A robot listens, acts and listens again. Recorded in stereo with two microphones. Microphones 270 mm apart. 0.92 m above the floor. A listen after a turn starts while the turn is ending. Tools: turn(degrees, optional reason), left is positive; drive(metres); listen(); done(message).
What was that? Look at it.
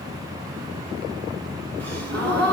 turn(degrees=-70, reason="The gasp: about 70° right or 110° right.")
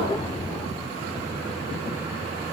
listen()
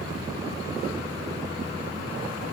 done("I heard a gasp, but can't make it out now. It was about straight ahead or 40° right.")